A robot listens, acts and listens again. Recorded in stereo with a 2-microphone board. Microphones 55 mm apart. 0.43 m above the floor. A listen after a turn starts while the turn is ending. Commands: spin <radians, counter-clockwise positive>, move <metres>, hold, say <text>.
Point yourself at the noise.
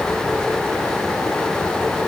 hold
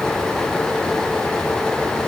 hold
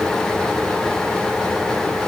say I can't make out anything.